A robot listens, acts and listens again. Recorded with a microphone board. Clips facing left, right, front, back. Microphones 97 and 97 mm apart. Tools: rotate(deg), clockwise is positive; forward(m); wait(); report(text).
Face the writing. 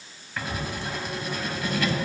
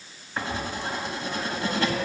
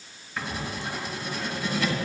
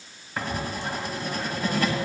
rotate(145)
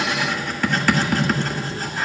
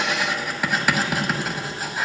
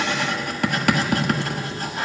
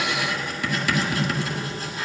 rotate(10)
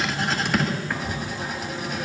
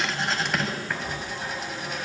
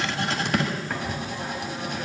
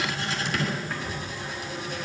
report("Found it: writing, straight ahead, 1 to 2 m away.")